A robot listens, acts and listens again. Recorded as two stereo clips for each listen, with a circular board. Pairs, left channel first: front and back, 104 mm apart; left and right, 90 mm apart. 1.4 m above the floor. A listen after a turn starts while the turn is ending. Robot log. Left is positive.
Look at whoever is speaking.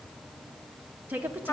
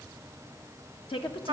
note: The woman speaking: 110° left.
cmd yaw +110
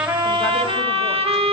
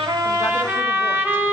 cmd idle
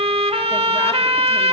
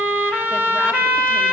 cmd idle
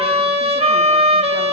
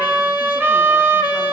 end: Facing where the woman speaking came from. I can't hear it now.